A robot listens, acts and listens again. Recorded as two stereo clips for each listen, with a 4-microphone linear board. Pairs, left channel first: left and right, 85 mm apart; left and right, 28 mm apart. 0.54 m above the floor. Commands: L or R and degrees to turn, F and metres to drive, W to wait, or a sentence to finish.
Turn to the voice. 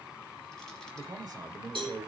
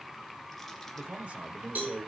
R55
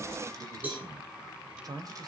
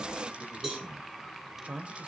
R60
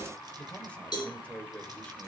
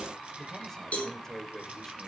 L15
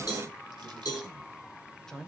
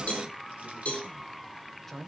Facing the man speaking.